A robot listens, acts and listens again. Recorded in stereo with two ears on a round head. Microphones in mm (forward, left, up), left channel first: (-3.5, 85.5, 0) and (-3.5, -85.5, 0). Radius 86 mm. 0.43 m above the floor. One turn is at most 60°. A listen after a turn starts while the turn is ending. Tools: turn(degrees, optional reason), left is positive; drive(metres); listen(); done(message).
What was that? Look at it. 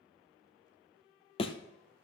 turn(degrees=30, reason="The thud: about 30° left or 150° left.")
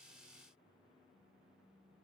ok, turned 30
listen()
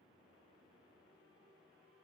done("I heard a thud, but can't make it out now. It was about straight ahead or 120° left.")